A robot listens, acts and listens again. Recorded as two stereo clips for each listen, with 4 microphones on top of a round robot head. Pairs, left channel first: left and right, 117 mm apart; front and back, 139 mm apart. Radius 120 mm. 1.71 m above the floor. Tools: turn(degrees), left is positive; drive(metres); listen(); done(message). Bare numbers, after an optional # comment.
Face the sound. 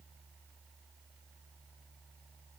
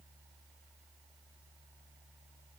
listen()
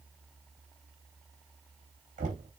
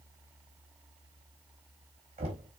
# The knocking: 125° right.
turn(-125)
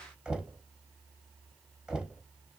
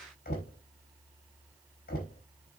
done("Found it: knocking, straight ahead, 2 to 4 m away.")